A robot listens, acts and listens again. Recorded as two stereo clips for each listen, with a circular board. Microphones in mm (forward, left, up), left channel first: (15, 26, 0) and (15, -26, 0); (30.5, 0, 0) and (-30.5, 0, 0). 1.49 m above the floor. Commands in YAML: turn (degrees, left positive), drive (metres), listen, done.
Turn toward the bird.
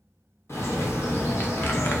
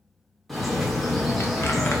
turn: 90
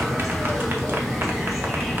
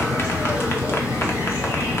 done: "Facing the bird, 1 to 2 m away."